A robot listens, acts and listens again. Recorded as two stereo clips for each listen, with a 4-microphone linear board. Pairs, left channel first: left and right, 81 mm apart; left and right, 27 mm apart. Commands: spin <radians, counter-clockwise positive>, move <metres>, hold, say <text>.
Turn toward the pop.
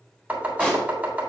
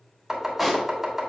spin 0.52
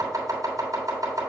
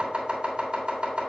hold
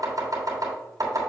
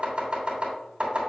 say I heard a pop, but can't make it out now. It was about 20° right or 140° left.